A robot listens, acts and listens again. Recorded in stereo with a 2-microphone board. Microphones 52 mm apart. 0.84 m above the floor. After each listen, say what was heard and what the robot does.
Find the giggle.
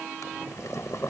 Keep listening.
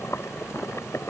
Keep listening.
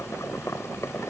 I can't make out a giggle to turn to.